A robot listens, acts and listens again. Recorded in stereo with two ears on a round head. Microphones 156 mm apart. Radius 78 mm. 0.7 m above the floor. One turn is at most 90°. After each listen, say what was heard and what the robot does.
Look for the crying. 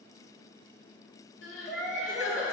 Turn 90° left.
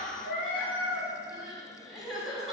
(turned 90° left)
Found it: crying, straight ahead.